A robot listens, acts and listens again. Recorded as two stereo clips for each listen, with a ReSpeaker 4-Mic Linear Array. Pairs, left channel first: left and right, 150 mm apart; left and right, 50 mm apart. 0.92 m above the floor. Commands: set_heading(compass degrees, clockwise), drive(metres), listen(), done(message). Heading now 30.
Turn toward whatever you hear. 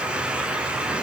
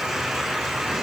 listen()
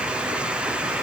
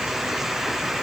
listen()
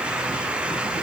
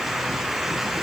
done("I can't make out anything to turn to.")